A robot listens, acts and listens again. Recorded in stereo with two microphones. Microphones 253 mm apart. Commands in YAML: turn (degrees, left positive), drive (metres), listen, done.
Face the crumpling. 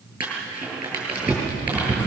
turn: -30
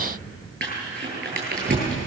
turn: -140
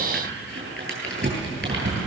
turn: -55
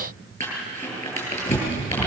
turn: 10
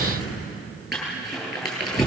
done: "Facing the crumpling, over 4 m away."